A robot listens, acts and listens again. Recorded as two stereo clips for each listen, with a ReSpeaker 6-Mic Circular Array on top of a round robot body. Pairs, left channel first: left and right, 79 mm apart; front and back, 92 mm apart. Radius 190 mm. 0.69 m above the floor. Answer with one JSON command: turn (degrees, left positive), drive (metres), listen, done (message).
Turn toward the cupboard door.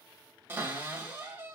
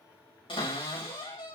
{"turn": -25}
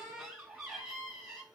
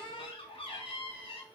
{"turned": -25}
{"done": "Facing the cupboard door."}